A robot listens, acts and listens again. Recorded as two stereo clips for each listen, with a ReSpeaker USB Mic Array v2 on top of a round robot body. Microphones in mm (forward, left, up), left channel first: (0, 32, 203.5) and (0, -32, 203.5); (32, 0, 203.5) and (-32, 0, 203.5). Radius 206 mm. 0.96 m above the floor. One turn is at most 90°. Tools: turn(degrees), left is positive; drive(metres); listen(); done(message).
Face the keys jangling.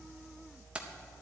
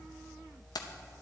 turn(degrees=-15)
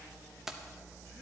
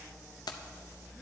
done("Facing the keys jangling, under 1 m away.")